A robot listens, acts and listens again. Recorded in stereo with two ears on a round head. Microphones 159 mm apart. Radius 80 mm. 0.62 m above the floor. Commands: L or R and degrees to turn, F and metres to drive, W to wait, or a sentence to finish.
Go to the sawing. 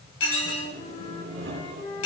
R70
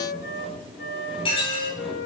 F1.0
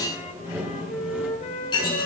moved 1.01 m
R10
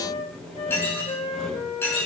F1.0
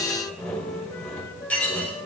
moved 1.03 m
L10
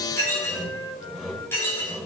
F1.0
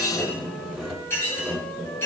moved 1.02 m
F1.0
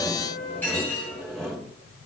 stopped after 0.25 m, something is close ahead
Arrived at the sawing, straight ahead.